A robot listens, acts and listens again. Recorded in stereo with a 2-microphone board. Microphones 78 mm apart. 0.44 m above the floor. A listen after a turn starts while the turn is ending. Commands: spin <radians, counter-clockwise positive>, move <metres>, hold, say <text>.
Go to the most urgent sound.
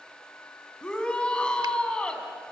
spin 0.52
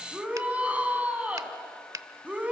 spin -0.35
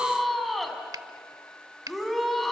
move 1.0
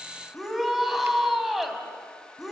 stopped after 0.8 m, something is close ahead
say Something is in my way. I am facing the shout but have not reached it.